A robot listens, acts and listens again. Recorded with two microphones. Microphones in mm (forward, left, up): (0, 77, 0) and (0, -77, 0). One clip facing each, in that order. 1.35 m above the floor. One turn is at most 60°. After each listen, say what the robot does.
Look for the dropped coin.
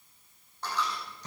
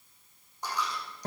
Turn 30° right.
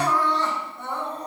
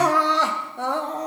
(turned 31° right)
Keep listening.
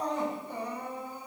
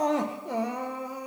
I heard a dropped coin, but can't make it out now. It was about 20° left or 135° right.